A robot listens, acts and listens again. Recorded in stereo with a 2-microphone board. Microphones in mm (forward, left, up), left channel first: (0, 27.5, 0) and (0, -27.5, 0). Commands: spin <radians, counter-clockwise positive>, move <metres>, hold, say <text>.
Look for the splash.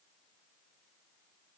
hold
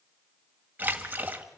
spin -0.61
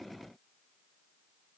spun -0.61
hold
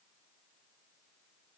say I heard a splash, but can't make it out now. It was about straight ahead or 110° right.